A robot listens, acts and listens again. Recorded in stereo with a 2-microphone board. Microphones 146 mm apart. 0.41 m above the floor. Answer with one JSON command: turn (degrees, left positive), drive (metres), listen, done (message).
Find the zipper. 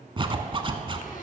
{"turn": -35}
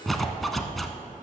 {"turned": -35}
{"done": "Facing the zipper."}